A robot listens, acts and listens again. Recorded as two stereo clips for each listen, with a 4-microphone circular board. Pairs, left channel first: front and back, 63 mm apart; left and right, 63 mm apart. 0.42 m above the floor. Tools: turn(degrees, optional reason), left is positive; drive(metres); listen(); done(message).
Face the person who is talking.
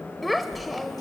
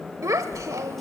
turn(degrees=-90, reason="The child speaking: 90° right.")
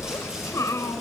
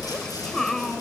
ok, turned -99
turn(degrees=10, reason="The child speaking is now 10° left.")
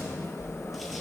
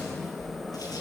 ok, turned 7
listen()
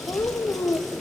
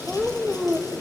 done("Facing the child speaking, 1 to 2 m away.")